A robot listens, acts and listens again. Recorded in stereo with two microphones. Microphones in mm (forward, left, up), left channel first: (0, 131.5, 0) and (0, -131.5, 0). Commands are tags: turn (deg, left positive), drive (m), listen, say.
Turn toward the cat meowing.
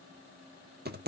<listen/>
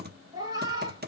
<turn deg="-15"/>
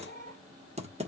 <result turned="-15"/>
<turn deg="-150"/>
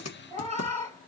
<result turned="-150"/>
<turn deg="-25"/>
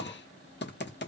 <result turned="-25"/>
<listen/>
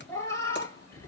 <turn deg="10"/>
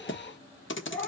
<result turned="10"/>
<say>Facing the cat meowing, 2 to 4 m away.</say>